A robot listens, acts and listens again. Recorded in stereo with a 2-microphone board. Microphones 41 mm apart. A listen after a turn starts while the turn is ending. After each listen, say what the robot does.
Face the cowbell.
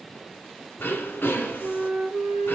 Keep listening.
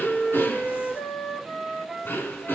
Keep listening.
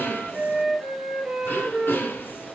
I can't make out a cowbell, only throat clearing and a flute.